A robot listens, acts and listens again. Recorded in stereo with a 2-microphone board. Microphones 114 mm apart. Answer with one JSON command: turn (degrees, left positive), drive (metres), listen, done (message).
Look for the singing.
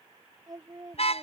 {"turn": -30}
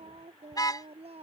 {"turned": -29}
{"turn": -125}
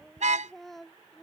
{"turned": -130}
{"done": "Facing the singing."}